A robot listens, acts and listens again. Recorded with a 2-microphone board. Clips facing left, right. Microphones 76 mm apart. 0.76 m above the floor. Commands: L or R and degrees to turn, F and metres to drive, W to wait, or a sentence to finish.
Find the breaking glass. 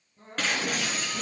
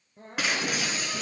R30
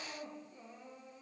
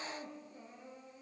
W
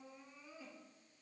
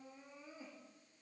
I heard breaking glass, but can't make it out now. It was about 20° left or 140° right.